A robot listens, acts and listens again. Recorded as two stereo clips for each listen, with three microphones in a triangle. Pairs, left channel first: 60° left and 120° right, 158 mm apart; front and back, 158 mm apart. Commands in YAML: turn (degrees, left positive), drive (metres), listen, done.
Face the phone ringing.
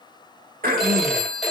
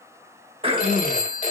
turn: -30
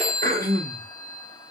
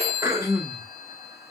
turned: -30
turn: -10
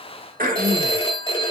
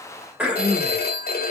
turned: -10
done: "Facing the phone ringing, 1 to 2 m away."